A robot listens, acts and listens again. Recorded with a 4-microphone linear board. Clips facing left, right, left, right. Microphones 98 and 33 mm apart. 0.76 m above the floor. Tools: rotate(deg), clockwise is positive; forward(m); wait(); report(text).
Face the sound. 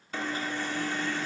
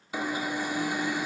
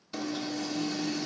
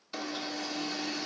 rotate(30)
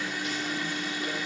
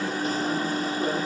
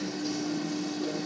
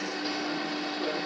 rotate(135)
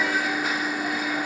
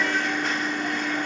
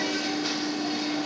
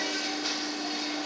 report("Facing the alarm, 1 to 2 m away.")